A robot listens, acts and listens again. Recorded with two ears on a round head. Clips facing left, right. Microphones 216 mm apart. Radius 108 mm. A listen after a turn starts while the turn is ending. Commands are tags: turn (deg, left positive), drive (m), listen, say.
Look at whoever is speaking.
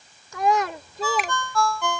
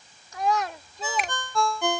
<turn deg="65"/>
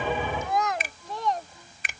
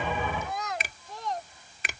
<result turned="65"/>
<turn deg="60"/>
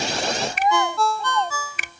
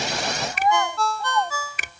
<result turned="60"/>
<turn deg="20"/>
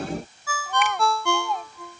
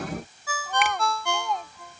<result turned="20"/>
<say>Facing the child speaking.</say>